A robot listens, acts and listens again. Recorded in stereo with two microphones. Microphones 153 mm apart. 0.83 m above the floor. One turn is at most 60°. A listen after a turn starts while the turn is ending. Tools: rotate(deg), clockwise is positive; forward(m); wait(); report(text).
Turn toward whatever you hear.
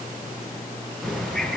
rotate(-30)
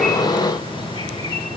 rotate(-60)
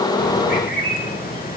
rotate(-60)
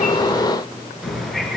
report("Found it: a bird, straight ahead.")